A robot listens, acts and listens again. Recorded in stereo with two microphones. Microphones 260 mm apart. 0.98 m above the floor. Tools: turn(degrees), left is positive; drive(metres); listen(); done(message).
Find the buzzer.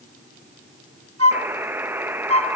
turn(degrees=-30)
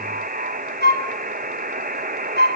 turn(degrees=-140)
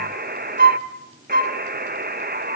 turn(degrees=-45)
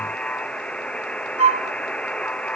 done("Found it: a buzzer, straight ahead.")